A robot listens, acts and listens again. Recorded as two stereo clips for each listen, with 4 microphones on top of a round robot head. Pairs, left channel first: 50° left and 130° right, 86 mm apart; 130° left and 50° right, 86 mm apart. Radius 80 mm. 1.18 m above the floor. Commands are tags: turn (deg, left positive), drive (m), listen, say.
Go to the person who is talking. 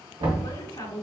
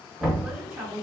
<turn deg="30"/>
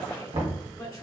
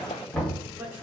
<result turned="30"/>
<turn deg="15"/>
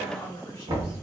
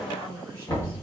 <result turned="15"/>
<drive m="1.0"/>
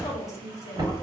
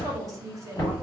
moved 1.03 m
<drive m="1.0"/>
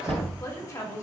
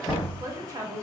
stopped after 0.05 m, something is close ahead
<say>Arrived at the woman speaking, straight ahead.</say>